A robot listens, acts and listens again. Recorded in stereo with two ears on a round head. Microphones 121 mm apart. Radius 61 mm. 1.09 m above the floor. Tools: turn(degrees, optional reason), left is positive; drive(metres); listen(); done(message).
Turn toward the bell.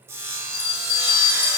turn(degrees=40, reason="The bell: about 40° left or 140° left.")
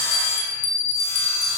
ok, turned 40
turn(degrees=95, reason="So it is at 95° left.")
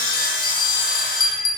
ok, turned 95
turn(degrees=30, reason="The bell is now 30° left.")
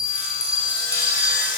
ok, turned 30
turn(degrees=20, reason="The bell is now 20° left.")
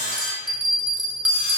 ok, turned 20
done("Facing the bell.")